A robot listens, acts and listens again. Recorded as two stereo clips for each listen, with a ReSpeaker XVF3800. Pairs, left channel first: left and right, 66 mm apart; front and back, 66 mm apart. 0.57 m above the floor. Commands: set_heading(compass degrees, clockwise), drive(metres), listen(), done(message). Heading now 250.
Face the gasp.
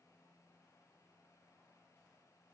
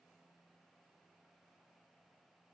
listen()
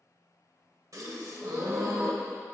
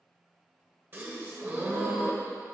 set_heading(10)
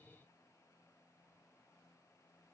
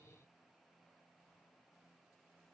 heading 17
done("I heard a gasp from this way, but can't make it out now.")